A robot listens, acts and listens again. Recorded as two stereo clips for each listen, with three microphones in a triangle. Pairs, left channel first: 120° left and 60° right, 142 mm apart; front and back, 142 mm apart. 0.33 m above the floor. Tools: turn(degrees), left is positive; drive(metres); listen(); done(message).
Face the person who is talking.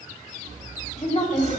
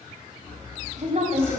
turn(degrees=150)
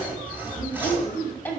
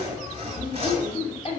turn(degrees=45)
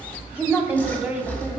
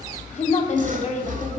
turn(degrees=20)
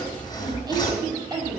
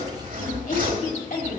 done("Facing the woman speaking, 2 to 4 m away.")